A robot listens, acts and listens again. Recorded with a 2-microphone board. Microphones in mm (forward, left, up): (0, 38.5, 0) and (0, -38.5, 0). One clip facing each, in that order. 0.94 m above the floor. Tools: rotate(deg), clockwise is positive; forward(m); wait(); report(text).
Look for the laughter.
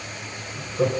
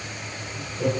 rotate(-60)
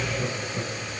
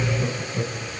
report("Facing the laughter.")